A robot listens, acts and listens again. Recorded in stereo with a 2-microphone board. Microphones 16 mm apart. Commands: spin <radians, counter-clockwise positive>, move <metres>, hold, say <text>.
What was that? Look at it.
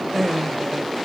spin 0.52
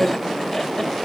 spin 2.62
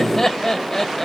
spin 0.52
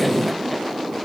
hold
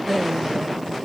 say Facing the laughter, 2 to 4 m away.